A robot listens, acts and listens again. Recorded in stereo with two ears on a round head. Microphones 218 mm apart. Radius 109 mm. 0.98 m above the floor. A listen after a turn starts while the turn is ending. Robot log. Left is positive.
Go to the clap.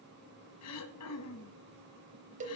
cmd idle
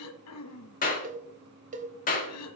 note: The clap: about 35° left or 145° left.
cmd yaw +35
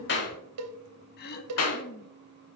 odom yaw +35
note: So it is at 105° left.
cmd yaw +105
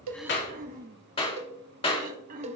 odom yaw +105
note: The clap is now 25° left.
cmd yaw +25
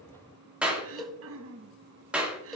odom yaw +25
cmd fwd 1.0
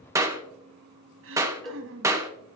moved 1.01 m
note: The clap is now 15° right.
cmd yaw -15
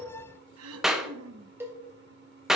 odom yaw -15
cmd fwd 1.0
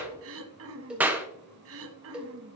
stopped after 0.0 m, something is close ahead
note: The clap is now 10° right.
cmd yaw -10
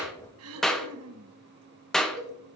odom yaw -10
end: Arrived at the clap, straight ahead.